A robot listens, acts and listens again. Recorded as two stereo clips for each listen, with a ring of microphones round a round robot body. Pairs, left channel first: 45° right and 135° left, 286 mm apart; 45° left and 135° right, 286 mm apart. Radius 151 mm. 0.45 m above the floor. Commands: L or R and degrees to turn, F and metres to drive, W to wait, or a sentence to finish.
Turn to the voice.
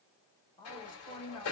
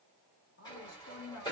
L30
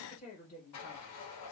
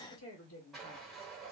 L10
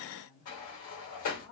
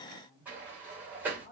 Facing the woman speaking.